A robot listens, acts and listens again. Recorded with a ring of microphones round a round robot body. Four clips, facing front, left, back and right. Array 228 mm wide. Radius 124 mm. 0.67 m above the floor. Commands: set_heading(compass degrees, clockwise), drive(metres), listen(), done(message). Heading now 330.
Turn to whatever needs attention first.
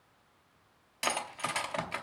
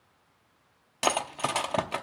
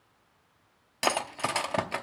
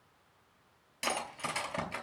listen()
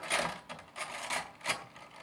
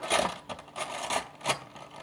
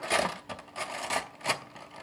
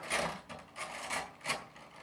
listen()
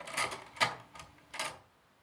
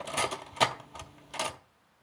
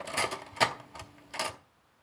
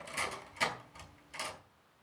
done("I can't make out anything urgent to turn to.")